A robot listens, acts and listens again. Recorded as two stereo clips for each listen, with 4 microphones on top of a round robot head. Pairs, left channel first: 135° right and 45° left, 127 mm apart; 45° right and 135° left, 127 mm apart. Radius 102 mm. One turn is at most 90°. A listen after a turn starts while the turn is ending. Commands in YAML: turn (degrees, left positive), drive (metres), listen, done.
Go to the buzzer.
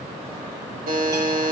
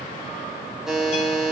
turn: 50
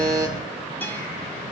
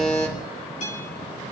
listen: true
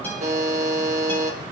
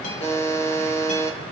drive: 1.0
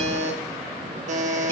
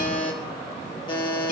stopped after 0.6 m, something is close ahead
turn: 10
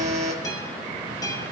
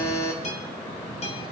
done: "Something is in my way. I am facing the buzzer but have not reached it."